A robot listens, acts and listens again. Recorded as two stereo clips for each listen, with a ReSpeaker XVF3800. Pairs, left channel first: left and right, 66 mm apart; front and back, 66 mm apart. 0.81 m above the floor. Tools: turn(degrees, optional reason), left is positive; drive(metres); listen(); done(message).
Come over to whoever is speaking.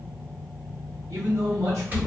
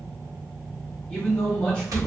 turn(degrees=-70, reason="The man speaking: 70° right.")
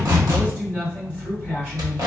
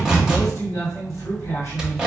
turn(degrees=-20, reason="The man speaking is now 20° right.")
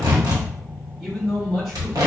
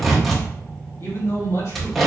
drive(metres=1.0)
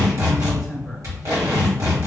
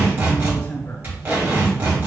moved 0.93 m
drive(metres=1.0)
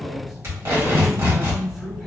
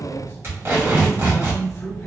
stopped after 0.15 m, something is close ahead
turn(degrees=-10, reason="The man speaking is now 10° right.")
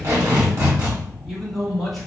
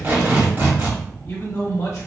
done("I am next to the man speaking.")